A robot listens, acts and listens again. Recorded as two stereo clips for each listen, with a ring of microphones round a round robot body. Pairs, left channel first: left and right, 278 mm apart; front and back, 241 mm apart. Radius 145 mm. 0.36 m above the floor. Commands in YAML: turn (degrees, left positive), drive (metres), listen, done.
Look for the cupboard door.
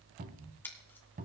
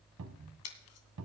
turn: -150
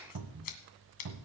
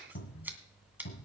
turn: -60
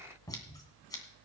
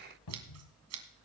turn: 10
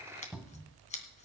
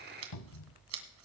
done: "Found it: a cupboard door, straight ahead."